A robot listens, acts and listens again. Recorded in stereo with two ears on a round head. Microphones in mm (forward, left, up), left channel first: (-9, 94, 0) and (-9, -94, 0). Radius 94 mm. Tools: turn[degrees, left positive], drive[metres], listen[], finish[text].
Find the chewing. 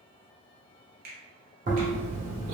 Thought: The chewing: about 40° right or 140° right.
Action: turn[-40]
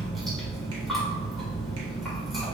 Action: finish[Found it: chewing, straight ahead, 1 to 2 m away.]